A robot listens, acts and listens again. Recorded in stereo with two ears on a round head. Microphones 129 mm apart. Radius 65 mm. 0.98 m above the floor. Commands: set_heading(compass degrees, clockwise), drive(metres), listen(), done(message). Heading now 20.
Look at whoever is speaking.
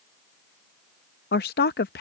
set_heading(310)
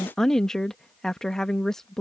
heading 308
done("Found it: a woman speaking, straight ahead.")